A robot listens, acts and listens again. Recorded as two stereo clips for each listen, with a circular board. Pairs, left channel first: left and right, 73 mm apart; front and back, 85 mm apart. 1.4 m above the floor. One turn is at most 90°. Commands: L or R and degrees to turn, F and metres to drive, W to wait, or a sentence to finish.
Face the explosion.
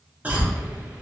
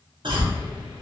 R15
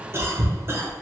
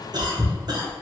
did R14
I heard an explosion from this way, but can't make it out now.